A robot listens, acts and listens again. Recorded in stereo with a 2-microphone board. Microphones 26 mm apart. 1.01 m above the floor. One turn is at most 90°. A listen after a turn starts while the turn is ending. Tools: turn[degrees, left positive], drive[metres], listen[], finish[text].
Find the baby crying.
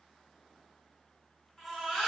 Action: turn[30]
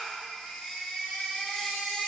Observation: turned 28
Thought: So it is at 150° left.
Action: turn[90]
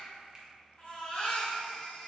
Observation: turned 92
Thought: The baby crying is now 60° left.
Action: turn[60]
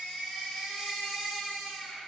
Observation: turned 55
Action: finish[Found it: a baby crying, straight ahead, 1 to 2 m away.]